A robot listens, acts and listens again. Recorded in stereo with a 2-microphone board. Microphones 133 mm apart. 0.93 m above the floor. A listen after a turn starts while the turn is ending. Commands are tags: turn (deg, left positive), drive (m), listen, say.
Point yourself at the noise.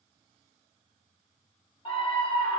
<turn deg="40"/>
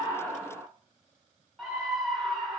<say>Found it: a scream, straight ahead.</say>